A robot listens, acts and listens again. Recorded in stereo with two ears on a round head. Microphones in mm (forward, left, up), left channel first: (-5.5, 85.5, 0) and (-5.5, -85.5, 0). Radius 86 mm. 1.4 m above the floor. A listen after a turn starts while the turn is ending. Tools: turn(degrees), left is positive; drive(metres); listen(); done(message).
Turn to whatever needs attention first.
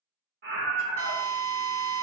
turn(degrees=-55)
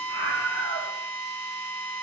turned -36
turn(degrees=-85)
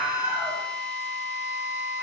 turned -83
listen()
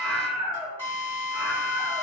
done("Found it: a scream, straight ahead, 1 to 2 m away.")